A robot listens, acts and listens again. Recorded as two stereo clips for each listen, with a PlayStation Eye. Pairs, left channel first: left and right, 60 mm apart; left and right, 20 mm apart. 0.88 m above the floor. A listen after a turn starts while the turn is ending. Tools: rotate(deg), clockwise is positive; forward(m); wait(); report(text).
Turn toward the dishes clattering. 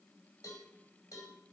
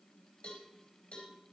wait()
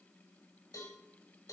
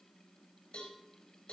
wait()
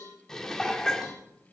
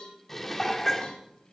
rotate(-30)
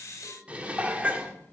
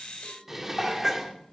rotate(20)
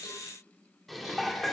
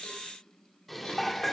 report("Found it: dishes clattering, straight ahead, 1 to 2 m away.")